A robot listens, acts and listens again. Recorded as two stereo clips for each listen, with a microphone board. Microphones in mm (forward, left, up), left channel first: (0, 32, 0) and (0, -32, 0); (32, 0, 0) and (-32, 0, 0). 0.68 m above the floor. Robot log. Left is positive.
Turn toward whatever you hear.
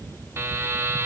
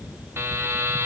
note: The buzzer: 135° right.
cmd yaw -135
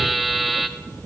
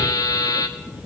end: Facing the buzzer.